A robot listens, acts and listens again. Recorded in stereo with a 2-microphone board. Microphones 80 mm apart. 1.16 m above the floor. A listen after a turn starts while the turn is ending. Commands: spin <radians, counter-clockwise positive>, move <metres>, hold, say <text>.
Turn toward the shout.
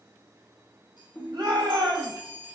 spin -1.22
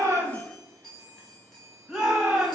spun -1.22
spin -0.26
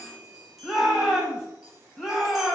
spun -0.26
say Found it: a shout, straight ahead.